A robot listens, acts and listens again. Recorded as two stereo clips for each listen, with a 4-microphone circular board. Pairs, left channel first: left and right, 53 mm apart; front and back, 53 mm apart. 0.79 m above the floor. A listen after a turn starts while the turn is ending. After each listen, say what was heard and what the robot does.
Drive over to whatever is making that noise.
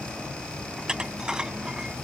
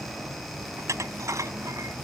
The dishes clattering: 165° right. Turn 165° right.
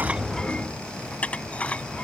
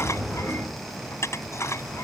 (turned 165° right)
The dishes clattering is now 25° left. Turn 25° left.
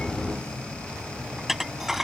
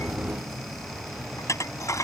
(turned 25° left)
Drive 1.0 m forward.
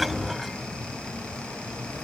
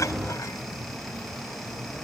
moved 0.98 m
Keep listening.
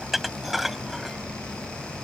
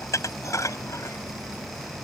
Drive 1.0 m forward.
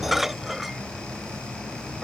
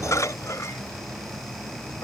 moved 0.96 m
Drive 1.0 m forward.
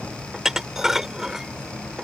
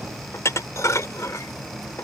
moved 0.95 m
Drive 1.0 m forward.
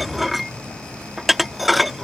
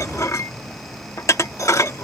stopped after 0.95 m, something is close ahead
I am next to the dishes clattering.